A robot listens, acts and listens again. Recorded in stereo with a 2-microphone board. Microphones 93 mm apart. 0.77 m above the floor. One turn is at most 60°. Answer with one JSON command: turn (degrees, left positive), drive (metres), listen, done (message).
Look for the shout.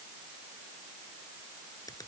{"listen": true}
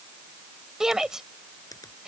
{"turn": -30}
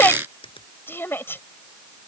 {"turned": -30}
{"turn": 25}
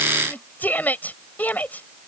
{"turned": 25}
{"turn": 20}
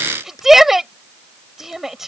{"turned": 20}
{"done": "Facing the shout."}